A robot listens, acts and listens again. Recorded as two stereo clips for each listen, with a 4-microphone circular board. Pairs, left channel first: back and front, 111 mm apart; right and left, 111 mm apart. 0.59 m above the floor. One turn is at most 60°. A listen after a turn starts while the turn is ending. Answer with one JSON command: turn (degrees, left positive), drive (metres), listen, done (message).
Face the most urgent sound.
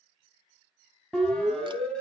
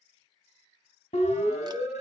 {"turn": -60}
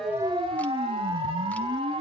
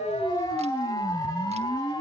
{"turn": -35}
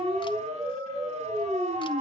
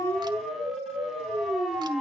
{"done": "Found it: a siren, straight ahead, over 4 m away."}